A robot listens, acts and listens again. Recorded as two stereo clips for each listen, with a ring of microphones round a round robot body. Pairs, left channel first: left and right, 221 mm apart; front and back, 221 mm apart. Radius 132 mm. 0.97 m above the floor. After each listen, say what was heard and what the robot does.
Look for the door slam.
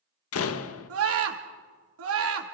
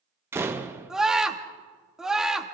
The door slam: 100° left. Turn 100° left.
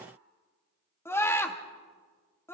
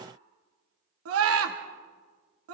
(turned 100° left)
I heard a door slam from this way, but can't make it out now.